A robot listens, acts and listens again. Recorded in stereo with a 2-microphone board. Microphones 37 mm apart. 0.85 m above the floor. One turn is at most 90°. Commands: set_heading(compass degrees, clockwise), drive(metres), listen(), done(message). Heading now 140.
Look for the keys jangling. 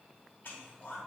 listen()
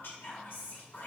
listen()
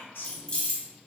set_heading(110)
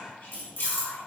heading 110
set_heading(20)
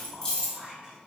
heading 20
set_heading(0)
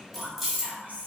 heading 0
done("Found it: keys jangling, straight ahead.")